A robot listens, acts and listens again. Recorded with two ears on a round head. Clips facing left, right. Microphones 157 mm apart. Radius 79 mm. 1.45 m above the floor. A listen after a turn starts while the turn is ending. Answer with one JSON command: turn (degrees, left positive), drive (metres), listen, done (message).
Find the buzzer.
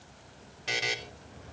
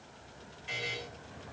{"turn": 90}
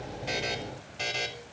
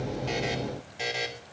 {"turn": -10}
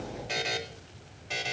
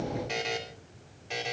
{"done": "Facing the buzzer, 2 to 4 m away."}